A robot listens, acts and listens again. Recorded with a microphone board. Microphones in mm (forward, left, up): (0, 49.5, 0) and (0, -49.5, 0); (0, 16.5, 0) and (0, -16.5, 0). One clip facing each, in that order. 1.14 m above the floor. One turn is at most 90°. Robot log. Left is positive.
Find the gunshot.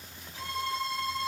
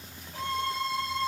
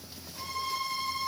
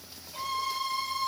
cmd idle
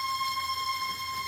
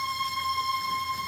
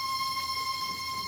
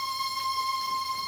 cmd idle
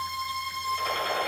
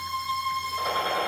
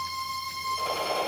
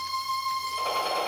note: The gunshot: about 20° right or 160° right.
cmd yaw -20
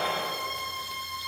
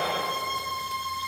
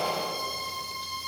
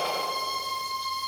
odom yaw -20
note: So it is at 140° right.
cmd yaw -90
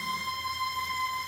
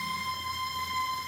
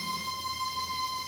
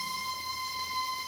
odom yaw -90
note: Nothing new. It was at 50° right.
cmd yaw -50
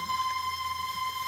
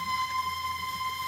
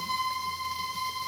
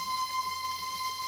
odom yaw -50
end: I heard a gunshot from this way, but can't make it out now.